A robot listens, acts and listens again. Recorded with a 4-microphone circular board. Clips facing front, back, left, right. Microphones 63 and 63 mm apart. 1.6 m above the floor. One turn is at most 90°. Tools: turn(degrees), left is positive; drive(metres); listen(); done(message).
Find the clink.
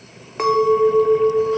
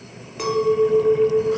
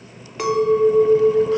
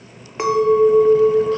turn(degrees=-30)
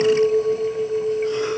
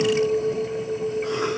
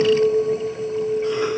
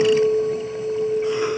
done("Facing the clink.")